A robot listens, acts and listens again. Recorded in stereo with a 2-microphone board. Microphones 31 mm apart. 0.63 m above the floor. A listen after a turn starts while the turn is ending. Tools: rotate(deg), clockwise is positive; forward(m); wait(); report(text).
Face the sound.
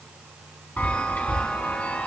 rotate(-55)
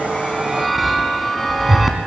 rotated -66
report("Found it: a chime, straight ahead, 1 to 2 m away.")